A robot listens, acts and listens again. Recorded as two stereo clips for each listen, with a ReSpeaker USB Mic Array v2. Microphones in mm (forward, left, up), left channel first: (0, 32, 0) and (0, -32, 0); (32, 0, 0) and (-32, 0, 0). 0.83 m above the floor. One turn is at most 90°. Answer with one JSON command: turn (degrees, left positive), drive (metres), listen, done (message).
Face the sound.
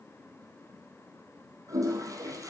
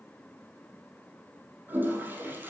{"turn": -90}
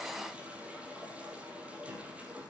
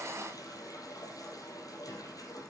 {"turn": -20}
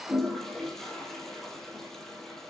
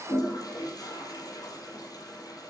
{"done": "Facing the toilet flushing, 2 to 4 m away."}